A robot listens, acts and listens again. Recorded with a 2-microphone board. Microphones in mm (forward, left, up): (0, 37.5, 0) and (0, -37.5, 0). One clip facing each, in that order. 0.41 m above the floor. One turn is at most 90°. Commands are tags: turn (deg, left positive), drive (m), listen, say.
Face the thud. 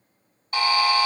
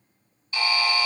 <listen/>
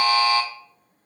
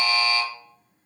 <listen/>
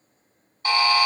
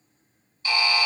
<say>I can't make out a thud to turn to.</say>